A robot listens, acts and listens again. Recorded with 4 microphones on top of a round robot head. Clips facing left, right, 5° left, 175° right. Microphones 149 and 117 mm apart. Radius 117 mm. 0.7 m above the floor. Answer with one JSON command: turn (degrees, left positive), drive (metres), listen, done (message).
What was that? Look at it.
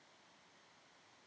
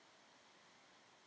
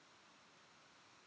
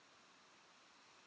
{"listen": true}
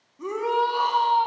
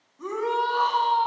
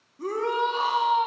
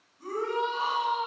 {"turn": 10}
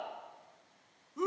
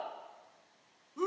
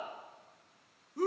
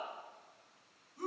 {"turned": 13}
{"done": "Found it: a shout, straight ahead."}